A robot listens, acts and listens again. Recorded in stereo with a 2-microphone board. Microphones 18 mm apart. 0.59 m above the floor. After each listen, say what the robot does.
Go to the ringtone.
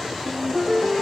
Turn 20° left.
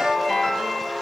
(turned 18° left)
Drive 1.0 m forward.
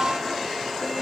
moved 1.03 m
Drive 1.0 m forward.
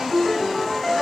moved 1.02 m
Drive 1.0 m forward.
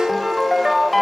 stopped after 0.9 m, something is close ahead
Arrived at the ringtone, straight ahead.